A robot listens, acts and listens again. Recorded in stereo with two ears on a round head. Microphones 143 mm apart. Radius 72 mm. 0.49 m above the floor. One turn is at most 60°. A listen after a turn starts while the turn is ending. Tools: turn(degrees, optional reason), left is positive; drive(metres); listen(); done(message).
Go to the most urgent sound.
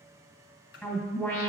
turn(degrees=30)
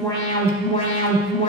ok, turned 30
turn(degrees=60, reason="So it is at 140° left.")
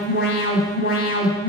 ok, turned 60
turn(degrees=60, reason="The alarm is now 65° left.")
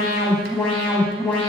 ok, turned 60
drive(metres=1.0)
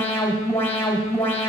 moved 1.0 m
turn(degrees=15, reason="The alarm is now 15° left.")
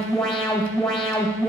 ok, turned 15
drive(metres=1.0)
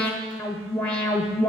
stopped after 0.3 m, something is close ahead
turn(degrees=10, reason="The alarm is now 10° left.")
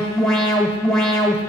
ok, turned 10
done("I am next to the alarm.")